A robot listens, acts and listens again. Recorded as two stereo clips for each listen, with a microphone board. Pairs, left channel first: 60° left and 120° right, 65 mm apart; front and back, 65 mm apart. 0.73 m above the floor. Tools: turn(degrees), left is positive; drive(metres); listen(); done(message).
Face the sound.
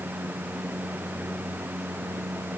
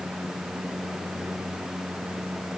listen()
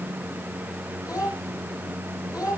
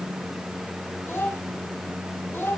turn(degrees=50)
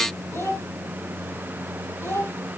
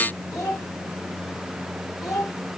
turn(degrees=20)
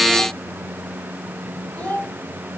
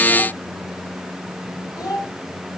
done("Facing the child speaking.")